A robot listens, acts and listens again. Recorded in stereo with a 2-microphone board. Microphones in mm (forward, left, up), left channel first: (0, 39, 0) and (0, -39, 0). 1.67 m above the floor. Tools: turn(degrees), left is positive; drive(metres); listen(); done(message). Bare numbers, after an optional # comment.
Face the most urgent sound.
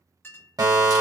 # The fire alarm: about 55° right or 125° right.
turn(-55)
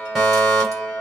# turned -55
done("Found it: a fire alarm, straight ahead, 1 to 2 m away.")